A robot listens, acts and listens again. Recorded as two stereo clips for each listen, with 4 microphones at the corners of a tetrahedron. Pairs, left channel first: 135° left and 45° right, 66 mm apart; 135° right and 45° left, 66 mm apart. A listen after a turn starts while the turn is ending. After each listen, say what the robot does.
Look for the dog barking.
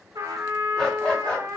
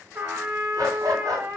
Turn 60° left.
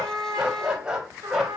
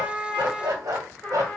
Turn 40° left.
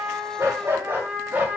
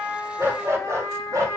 Turn 20° left.
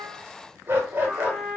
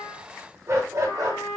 Turn 15° left.
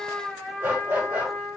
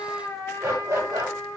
Turn 15° left.
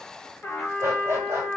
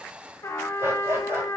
Found it: a dog barking, straight ahead, 1 to 2 m away.